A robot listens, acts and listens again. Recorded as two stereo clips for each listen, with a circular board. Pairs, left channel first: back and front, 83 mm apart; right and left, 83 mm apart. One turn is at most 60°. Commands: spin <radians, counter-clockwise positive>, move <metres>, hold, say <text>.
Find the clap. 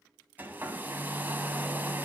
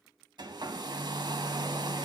hold
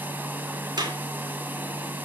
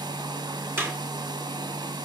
spin 0.52
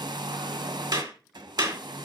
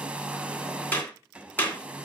spin -0.44
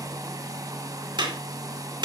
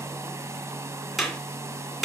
say Found it: a clap, straight ahead, 2 to 4 m away.